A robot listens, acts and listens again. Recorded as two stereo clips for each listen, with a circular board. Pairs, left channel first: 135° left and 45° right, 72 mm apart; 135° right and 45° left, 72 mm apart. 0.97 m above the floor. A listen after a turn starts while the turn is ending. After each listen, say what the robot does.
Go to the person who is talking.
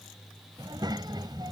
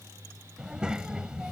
Turn 35° right.
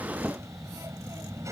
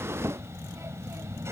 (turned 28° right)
Drive 1.0 m forward.
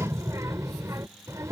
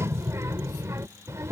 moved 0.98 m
Drive 1.0 m forward.
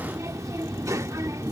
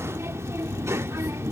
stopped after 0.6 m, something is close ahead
I am next to the child speaking.